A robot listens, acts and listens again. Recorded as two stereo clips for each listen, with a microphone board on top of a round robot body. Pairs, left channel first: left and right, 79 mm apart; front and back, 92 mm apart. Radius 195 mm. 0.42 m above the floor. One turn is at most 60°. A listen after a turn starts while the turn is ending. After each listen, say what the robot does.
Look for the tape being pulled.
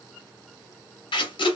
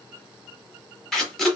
Turn 60° left.
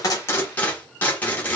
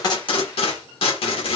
Turn 20° left.
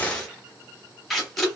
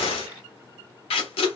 Found it: tape being pulled, straight ahead.